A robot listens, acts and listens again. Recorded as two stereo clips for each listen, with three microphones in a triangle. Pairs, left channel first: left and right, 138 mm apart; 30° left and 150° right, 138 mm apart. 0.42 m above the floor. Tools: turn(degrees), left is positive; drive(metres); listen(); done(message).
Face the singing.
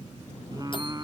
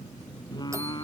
turn(degrees=-30)
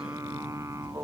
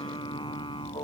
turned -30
turn(degrees=-25)
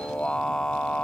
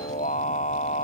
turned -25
done("Found it: singing, straight ahead.")